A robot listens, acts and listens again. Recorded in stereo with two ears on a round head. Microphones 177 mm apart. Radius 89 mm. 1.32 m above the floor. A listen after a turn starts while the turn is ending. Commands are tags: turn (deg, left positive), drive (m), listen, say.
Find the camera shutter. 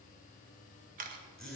<turn deg="-45"/>
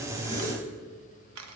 <turn deg="-90"/>
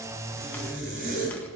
<listen/>
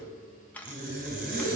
<turn deg="10"/>
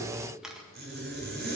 <say>Facing the camera shutter, 1 to 2 m away.</say>